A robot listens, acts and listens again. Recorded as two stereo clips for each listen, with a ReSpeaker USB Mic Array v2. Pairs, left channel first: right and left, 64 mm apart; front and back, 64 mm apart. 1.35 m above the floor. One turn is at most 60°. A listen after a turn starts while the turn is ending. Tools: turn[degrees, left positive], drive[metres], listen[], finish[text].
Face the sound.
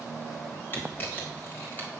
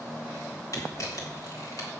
Thought: The camera shutter: 35° right.
Action: turn[-35]
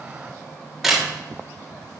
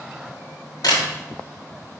Action: finish[Facing the camera shutter.]